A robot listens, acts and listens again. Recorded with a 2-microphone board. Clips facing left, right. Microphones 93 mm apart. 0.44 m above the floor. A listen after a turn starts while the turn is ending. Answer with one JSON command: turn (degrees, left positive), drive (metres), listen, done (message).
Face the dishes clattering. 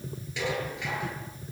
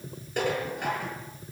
{"turn": -50}
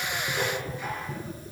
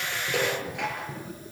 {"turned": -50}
{"turn": -80}
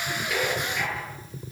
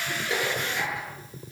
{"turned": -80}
{"listen": true}
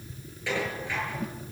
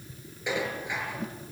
{"turn": -20}
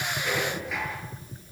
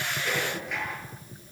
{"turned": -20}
{"listen": true}
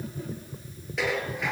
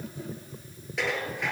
{"done": "Facing the dishes clattering."}